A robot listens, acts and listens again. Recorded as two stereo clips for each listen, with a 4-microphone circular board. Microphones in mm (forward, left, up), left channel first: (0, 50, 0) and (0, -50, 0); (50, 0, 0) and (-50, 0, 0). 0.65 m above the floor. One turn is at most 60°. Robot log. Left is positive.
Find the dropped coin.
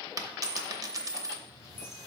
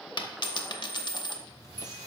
note: The dropped coin: 40° right.
cmd yaw -40
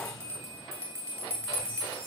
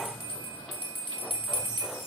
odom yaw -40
end: Facing where the dropped coin came from. I can't hear it now.